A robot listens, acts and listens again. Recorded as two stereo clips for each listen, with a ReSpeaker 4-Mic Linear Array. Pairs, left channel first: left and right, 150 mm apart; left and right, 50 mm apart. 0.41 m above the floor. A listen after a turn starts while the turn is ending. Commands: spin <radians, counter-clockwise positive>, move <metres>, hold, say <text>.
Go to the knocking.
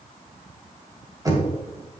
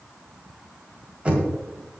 spin -0.44
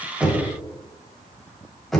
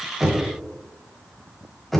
move 1.0
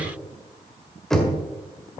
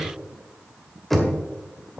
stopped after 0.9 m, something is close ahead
say Arrived at the knocking, straight ahead.